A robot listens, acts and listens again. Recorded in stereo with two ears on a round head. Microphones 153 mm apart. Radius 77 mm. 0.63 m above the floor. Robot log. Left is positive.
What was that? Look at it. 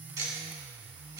note: The ticking: about 20° right or 160° right.
cmd yaw -20
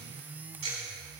note: So it is at 140° right.
cmd yaw -140
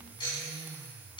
note: The ticking is now 30° left.
cmd yaw +30
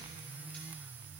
cmd idle
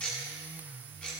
end: Facing the ticking.